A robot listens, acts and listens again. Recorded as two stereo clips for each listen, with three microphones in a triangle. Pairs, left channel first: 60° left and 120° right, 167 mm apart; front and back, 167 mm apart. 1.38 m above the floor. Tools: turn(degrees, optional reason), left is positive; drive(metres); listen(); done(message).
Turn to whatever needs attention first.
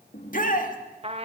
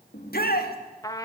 turn(degrees=25, reason="The shout: 25° left.")
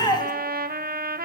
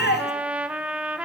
done("Found it: a shout, straight ahead.")